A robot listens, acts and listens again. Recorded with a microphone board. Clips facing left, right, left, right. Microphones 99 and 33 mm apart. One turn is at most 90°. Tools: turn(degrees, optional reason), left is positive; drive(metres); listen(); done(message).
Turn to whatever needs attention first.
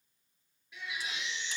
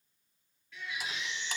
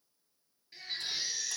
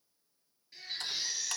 turn(degrees=15, reason="The baby crying: about 15° left or 165° left.")
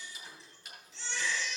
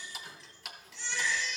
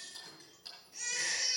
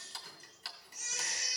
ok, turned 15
turn(degrees=90, reason="So it is at 150° left.")
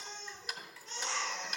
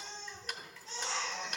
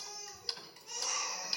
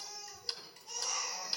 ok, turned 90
turn(degrees=55, reason="The baby crying is now 55° left.")
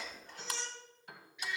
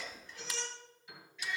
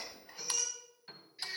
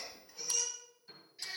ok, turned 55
turn(degrees=15, reason="The baby crying is now 15° left.")
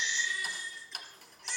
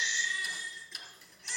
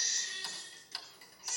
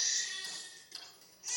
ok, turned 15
done("Facing the baby crying.")